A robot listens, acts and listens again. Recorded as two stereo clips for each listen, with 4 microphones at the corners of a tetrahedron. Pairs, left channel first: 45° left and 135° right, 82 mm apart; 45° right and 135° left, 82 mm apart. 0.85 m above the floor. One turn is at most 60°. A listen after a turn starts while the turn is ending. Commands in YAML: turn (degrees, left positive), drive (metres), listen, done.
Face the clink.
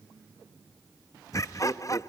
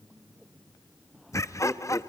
listen: true
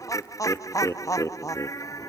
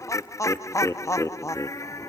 listen: true
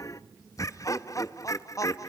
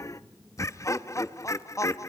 done: "I can't make out a clink, only laughter."